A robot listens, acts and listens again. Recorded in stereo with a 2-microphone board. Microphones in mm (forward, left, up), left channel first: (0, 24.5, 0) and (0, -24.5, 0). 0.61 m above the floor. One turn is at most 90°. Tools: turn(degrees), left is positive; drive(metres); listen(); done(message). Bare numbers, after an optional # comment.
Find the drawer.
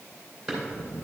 turn(-30)
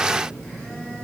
listen()
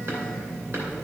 listen()
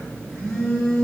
done("I heard a drawer, but can't make it out now. It was about 20° left or 140° right.")